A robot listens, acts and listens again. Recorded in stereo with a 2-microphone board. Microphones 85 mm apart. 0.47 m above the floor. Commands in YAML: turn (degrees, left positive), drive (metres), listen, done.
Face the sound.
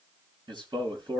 turn: -65
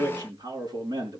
turn: -50
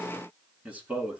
turn: -15
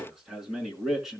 done: "Found it: a man speaking, straight ahead, over 4 m away."